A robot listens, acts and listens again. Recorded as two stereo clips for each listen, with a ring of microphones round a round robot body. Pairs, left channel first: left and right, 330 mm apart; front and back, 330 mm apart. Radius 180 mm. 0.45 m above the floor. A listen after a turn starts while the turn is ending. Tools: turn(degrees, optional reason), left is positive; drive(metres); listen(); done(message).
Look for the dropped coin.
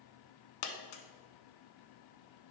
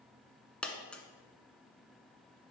turn(degrees=85, reason="The dropped coin: 85° left.")
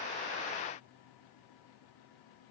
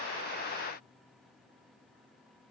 done("Facing where the dropped coin came from. I can't hear it now.")